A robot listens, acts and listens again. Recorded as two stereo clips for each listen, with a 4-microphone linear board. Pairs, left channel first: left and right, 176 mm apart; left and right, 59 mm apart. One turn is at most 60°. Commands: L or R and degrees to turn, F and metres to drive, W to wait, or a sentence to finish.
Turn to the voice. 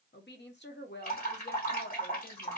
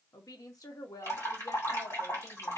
L60
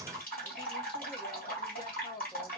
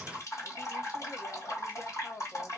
L30
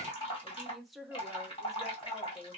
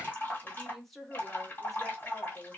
Found it: a woman speaking, straight ahead.